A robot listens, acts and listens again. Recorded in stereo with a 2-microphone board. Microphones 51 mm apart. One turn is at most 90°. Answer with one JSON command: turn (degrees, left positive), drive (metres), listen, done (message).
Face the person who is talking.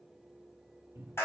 {"listen": true}
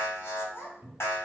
{"turn": 55}
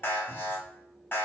{"listen": true}
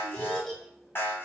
{"turn": 10}
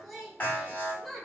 {"done": "Facing the child speaking, 1 to 2 m away."}